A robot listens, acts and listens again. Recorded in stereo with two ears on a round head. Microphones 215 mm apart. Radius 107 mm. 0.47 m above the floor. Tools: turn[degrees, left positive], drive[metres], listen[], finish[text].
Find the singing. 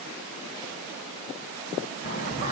Thought: The singing: about 35° left or 145° left.
Action: turn[35]
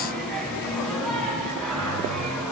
Action: finish[Facing the singing.]